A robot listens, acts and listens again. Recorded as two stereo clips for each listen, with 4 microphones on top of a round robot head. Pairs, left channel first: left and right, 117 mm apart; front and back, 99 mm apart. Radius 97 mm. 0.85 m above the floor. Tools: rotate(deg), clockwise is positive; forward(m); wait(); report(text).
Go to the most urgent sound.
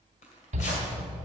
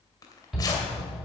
rotate(95)
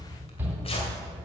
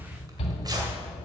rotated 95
rotate(15)
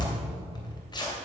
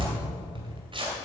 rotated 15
forward(1.0)
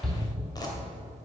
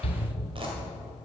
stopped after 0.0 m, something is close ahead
report("Something is in my way. I am facing the shout but have not reached it.")